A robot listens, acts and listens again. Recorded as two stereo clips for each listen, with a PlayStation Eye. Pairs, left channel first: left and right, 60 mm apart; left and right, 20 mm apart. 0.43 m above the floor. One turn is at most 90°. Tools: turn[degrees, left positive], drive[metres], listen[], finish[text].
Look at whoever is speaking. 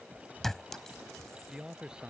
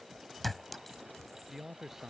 Action: turn[-30]
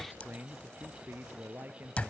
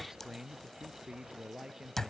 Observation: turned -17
Thought: The man speaking: about 35° right or 145° right.
Action: turn[-35]
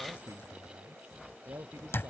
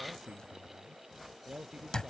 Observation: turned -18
Thought: So it is at 125° right.
Action: turn[-90]
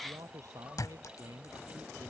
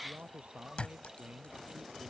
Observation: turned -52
Thought: The man speaking is now 70° right.
Action: turn[-70]
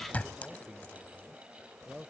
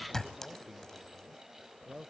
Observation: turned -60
Thought: The man speaking is now 10° right.
Action: turn[-10]
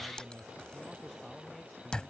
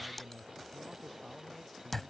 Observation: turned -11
Action: finish[Facing the man speaking.]